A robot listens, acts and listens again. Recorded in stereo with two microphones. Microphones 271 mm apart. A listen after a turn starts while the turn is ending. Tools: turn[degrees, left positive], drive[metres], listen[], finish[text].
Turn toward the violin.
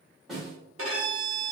Thought: The violin: about 55° right or 125° right.
Action: turn[-55]
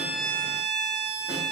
Action: finish[Found it: a violin, straight ahead, under 1 m away.]